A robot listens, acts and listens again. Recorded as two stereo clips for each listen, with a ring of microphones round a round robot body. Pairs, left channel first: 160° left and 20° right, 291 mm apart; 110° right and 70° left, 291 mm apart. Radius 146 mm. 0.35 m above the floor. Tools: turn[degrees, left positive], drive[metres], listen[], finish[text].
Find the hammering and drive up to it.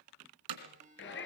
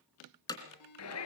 Thought: The hammering: 35° right.
Action: turn[-35]
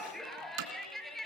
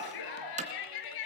Action: drive[1.0]
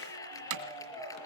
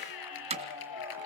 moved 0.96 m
Action: drive[1.0]
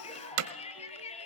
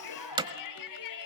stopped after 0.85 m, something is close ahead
Action: finish[I am next to the hammering.]